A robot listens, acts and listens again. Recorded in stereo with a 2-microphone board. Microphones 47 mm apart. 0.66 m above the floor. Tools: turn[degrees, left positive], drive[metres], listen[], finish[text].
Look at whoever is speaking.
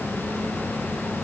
Action: listen[]
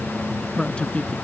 Thought: The man speaking: about 25° left or 155° left.
Action: turn[25]
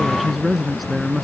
Action: finish[Found it: a man speaking, straight ahead.]